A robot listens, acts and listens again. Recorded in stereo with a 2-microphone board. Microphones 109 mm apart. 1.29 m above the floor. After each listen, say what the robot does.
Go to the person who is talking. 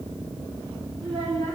Turn 90° right.
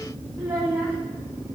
Turn 15° right.
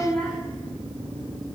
Drive 1.0 m forward.
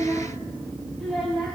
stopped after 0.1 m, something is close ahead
Something is in my way. I am facing the child speaking but have not reached it.